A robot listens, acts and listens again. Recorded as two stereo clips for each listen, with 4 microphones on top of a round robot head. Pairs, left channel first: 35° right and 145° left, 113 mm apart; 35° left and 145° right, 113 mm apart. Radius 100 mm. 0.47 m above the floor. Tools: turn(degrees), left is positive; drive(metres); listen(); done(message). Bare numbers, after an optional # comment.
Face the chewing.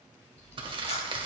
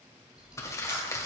# The chewing: 60° right.
turn(-60)
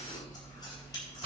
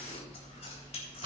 # The chewing is now 15° left.
turn(15)
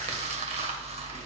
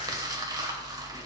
done("Facing the chewing.")